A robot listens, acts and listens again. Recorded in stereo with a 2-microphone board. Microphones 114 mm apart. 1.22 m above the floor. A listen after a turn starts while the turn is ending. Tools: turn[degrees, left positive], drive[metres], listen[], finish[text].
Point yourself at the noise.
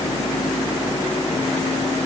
Action: listen[]
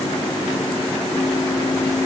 Action: listen[]
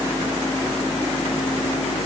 Action: finish[I can't make out anything.]